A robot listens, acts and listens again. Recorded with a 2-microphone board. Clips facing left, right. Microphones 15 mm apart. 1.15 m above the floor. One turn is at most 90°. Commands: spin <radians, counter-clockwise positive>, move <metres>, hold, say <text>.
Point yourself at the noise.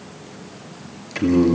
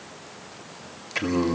spin 0.52
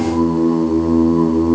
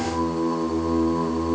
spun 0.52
spin 1.57
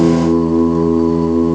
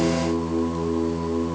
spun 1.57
spin 0.87
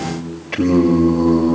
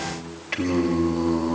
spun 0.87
spin -0.26
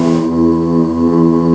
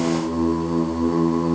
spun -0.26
say Found it: singing, straight ahead, 1 to 2 m away.